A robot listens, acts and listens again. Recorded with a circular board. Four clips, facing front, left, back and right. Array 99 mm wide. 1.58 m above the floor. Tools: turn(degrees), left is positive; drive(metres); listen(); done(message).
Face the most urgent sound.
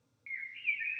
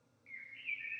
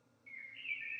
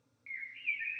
listen()
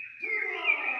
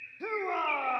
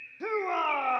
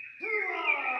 turn(degrees=160)
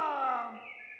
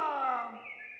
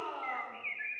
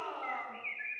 turn(degrees=40)
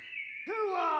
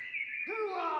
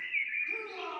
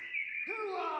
turn(degrees=10)
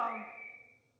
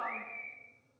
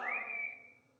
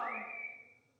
done("Found it: a shout, straight ahead, 1 to 2 m away.")